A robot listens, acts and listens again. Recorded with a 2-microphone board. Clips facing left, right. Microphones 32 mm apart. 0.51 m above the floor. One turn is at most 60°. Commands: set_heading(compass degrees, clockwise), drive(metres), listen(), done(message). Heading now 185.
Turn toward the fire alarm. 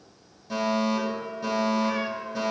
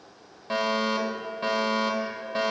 set_heading(235)
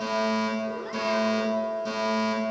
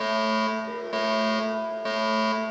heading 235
set_heading(295)
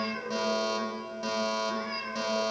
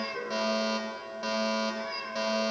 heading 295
set_heading(310)
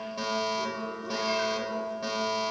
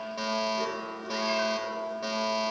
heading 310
done("Found it: a fire alarm, straight ahead, 2 to 4 m away.")